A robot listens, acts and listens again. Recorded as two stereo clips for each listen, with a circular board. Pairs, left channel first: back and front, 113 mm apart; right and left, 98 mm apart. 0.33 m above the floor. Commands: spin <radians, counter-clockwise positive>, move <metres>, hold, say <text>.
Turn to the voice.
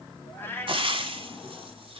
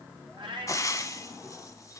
hold
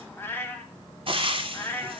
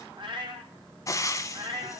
hold
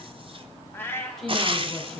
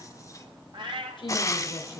spin -1.66
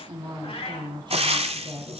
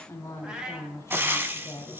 spin -0.61
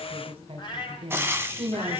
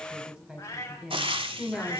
spin 0.17
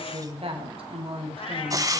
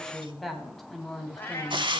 say Facing the woman speaking, 1 to 2 m away.